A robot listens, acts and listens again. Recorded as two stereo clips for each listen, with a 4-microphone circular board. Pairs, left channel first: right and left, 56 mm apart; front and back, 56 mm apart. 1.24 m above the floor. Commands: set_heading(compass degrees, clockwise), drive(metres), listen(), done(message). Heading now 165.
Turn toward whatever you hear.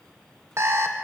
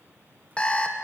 set_heading(100)
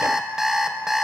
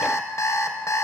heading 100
set_heading(90)
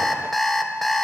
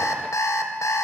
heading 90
done("Found it: an alarm clock, straight ahead.")